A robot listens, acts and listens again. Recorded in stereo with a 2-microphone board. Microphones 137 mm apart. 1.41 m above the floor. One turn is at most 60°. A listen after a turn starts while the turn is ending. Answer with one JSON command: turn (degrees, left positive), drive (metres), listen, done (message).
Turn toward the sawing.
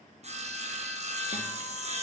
{"turn": -50}
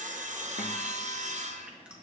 {"turn": -60}
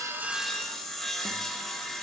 {"done": "Found it: sawing, straight ahead, under 1 m away."}